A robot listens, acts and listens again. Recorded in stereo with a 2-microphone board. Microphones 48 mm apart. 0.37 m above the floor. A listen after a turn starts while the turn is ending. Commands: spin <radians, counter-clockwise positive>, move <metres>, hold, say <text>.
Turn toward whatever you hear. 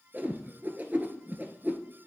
spin -0.70
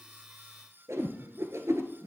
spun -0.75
spin -1.66
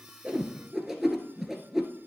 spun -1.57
say Facing the whoosh.